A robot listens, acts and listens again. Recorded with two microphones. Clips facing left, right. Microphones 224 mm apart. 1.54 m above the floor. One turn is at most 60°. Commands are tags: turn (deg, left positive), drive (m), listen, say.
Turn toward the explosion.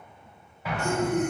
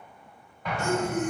<turn deg="30"/>
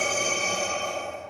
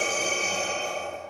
<listen/>
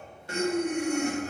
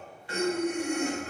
<say>I heard an explosion, but can't make it out now. It was about 25° right or 145° left.</say>